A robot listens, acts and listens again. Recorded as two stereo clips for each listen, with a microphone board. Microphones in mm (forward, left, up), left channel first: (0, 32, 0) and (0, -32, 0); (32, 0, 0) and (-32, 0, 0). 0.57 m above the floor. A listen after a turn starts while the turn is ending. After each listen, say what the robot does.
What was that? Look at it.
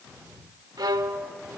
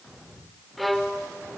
Turn 90° right.
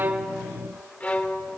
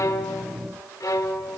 Turn 25° left.
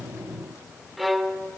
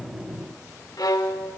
Found it: a violin, straight ahead, under 1 m away.